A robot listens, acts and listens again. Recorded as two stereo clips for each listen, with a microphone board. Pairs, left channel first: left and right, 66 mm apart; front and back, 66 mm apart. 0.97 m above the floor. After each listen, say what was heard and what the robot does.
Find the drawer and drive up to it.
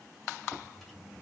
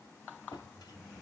Drive 1.0 m forward.
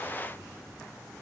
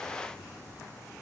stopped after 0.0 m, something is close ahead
Keep listening.
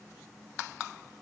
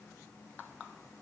Keep listening.
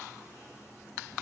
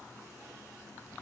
I heard a drawer from this way, but can't make it out now. I did not reach it.